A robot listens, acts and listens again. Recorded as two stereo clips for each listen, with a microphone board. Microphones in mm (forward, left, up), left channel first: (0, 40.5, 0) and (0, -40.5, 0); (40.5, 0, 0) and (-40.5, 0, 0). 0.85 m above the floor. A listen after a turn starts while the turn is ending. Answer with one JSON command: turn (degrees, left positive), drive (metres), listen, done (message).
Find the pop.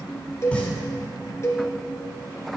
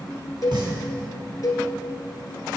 {"turn": 165}
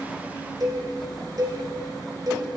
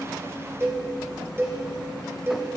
{"done": "I heard a pop from this way, but can't make it out now."}